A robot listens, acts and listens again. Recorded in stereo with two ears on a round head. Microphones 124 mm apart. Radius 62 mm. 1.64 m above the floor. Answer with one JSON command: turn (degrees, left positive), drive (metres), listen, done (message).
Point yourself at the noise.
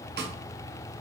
{"turn": -90}
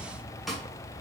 {"done": "Facing the snare drum."}